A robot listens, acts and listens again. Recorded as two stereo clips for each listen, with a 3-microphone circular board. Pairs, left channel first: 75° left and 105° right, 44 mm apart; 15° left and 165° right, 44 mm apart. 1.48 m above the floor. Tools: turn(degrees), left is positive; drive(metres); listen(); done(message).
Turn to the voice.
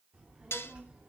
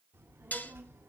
turn(degrees=-165)
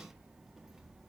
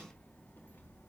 turn(degrees=-20)
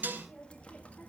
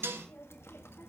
turn(degrees=20)
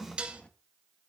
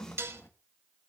turn(degrees=10)
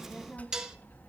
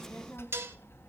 turn(degrees=35)
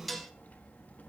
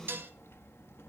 turn(degrees=25)
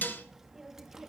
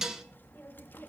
turn(degrees=-25)
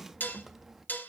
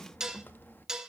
turn(degrees=-20)
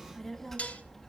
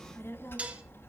done("Facing the child speaking.")